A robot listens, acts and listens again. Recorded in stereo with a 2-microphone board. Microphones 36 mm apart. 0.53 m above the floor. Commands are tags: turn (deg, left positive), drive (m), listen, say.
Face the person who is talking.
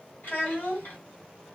<turn deg="60"/>
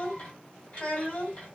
<turn deg="40"/>
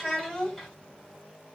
<say>Found it: a child speaking, straight ahead, 1 to 2 m away.</say>